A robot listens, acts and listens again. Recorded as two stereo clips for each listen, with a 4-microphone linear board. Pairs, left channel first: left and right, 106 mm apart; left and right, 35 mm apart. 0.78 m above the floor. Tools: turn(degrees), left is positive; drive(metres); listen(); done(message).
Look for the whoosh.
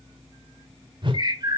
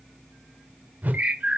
turn(degrees=-50)
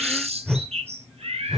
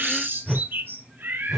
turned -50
done("Found it: a whoosh, straight ahead, under 1 m away.")